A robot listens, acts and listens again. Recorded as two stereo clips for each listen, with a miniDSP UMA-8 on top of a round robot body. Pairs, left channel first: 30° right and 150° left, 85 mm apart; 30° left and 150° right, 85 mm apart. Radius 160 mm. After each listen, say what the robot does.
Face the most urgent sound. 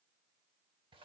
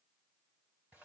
Keep listening.
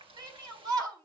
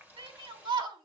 Turn 165° right.
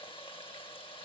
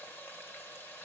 Keep listening.
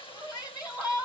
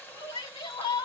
Turn 15° left.
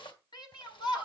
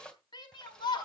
Facing the shout, over 4 m away.